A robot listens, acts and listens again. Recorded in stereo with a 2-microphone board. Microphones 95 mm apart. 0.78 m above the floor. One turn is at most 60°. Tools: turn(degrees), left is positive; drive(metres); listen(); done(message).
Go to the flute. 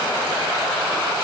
listen()
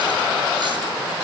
listen()
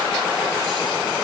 done("I can't make out a flute to turn to.")